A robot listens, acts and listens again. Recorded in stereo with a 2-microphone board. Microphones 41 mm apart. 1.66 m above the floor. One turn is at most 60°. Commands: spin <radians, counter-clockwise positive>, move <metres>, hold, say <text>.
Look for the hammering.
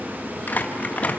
hold
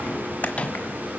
hold
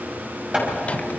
spin -0.44
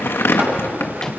spin -1.05
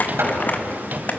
spin -1.05
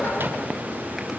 spin -0.17
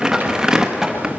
say Found it: hammering, straight ahead, over 4 m away.